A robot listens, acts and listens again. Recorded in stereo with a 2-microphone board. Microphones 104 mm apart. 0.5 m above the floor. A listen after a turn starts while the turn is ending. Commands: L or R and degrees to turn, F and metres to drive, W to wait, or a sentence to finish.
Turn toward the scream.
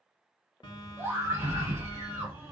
R25
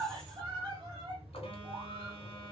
R125
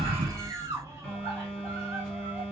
R30
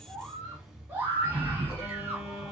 R20
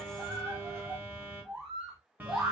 Found it: a scream, straight ahead, 1 to 2 m away.